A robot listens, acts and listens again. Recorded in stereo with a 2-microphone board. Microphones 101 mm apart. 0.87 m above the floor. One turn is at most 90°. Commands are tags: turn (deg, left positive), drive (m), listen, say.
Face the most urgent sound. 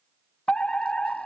<turn deg="30"/>
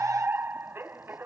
<turn deg="-20"/>
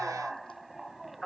<say>Facing the fire alarm.</say>